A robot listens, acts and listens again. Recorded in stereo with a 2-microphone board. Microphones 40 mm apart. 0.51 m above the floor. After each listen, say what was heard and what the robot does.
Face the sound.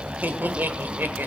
The laughter: about 55° right or 125° right. Turn 55° right.
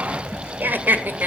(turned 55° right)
So it is at 60° right. Turn 60° right.
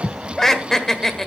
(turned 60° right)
The laughter is now 15° left. Turn 15° left.
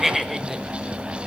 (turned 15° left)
Found it: laughter, straight ahead.